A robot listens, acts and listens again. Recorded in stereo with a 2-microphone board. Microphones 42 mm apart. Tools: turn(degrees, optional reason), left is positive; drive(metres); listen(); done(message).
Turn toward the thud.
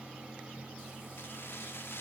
listen()
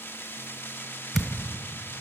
turn(degrees=30)
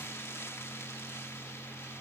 listen()
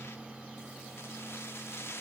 done("I heard a thud, but can't make it out now. It was about 30° right or 150° left.")